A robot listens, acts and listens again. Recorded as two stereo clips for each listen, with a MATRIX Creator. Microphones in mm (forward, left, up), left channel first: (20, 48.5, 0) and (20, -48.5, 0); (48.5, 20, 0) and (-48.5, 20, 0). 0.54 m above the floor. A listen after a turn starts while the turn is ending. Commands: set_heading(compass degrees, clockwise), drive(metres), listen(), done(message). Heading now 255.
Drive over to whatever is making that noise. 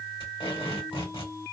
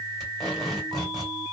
set_heading(165)
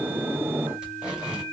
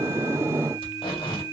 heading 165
set_heading(175)
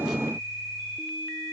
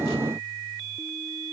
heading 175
listen()
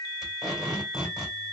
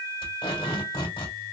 drive(1.0)
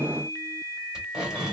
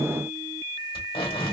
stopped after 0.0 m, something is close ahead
set_heading(185)
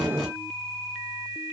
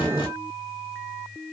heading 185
listen()
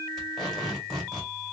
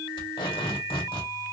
done("Something is in my way. I am facing the tape being pulled but have not reached it.")